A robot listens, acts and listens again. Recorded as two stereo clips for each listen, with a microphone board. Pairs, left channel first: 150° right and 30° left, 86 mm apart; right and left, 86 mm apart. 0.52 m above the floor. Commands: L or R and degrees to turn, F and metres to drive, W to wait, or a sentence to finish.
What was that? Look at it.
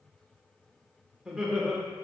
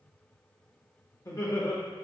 R60
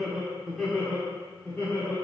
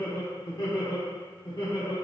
R95
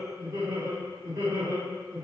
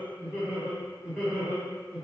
L15
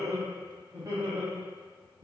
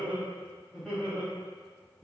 Found it: laughter, straight ahead, 2 to 4 m away.